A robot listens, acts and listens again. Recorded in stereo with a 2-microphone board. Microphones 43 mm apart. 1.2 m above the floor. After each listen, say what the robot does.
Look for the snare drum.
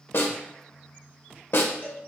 Turn 55° left.
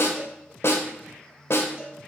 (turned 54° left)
Turn 70° left.
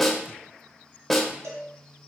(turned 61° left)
Facing the snare drum.